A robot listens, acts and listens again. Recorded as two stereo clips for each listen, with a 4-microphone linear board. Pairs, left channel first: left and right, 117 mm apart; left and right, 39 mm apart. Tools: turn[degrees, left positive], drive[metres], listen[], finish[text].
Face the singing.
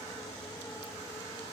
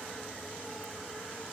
Action: listen[]
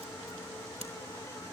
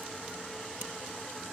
Action: listen[]
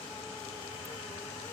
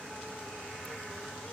Action: finish[I can't make out singing to turn to.]